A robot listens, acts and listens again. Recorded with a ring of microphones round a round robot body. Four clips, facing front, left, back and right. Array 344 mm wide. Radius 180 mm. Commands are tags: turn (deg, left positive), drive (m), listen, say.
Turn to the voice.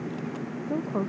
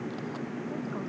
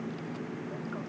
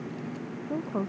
<turn deg="-30"/>
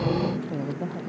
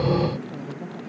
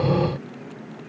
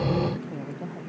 <say>Facing the woman speaking.</say>